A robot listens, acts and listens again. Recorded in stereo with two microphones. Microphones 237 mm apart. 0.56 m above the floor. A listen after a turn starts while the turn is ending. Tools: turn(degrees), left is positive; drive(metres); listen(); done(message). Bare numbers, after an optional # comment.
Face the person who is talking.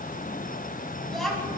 turn(30)
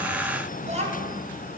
# So it is at 30° right.
turn(-30)
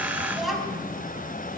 done("Facing the child speaking, 2 to 4 m away.")